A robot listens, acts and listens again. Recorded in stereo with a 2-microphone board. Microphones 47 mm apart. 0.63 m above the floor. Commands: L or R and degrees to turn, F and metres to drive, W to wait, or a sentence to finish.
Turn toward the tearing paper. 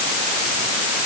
W
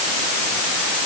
W
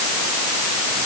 I can't make out tearing paper to turn to.